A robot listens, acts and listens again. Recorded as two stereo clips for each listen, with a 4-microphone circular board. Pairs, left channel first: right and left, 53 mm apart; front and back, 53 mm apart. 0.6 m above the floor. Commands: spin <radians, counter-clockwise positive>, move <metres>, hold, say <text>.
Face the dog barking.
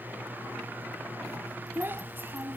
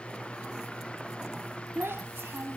hold
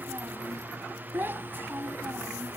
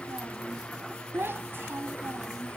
hold
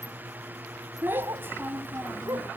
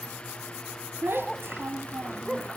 spin 1.75
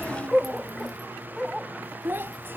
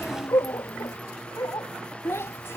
say Found it: a dog barking, straight ahead.